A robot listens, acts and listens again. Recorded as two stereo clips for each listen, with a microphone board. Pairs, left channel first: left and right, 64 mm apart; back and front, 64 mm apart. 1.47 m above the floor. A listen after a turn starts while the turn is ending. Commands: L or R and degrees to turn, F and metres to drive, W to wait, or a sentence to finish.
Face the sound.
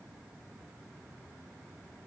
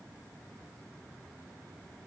W
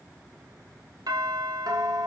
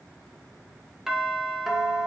R85
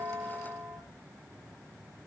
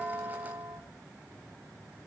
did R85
R35
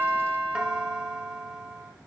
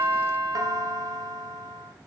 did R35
R15
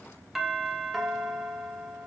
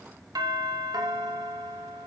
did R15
Found it: a doorbell, straight ahead, 2 to 4 m away.